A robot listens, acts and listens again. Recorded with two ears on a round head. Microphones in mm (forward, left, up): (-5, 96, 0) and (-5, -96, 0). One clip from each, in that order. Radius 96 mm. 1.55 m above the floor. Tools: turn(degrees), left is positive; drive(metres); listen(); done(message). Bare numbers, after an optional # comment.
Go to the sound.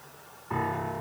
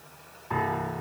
# The piano: about 20° right or 160° right.
turn(-20)
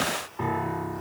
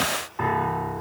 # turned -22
# So it is at 135° right.
turn(-135)
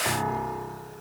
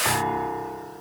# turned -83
# The piano is now 55° right.
turn(-55)
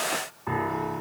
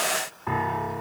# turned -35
# The piano is now 20° right.
turn(-20)
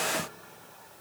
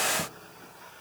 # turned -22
listen()
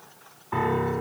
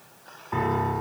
drive(1.0)
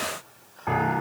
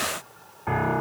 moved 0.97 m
drive(1.0)
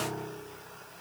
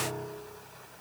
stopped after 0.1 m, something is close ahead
done("Something is in my way. I am facing the piano but have not reached it.")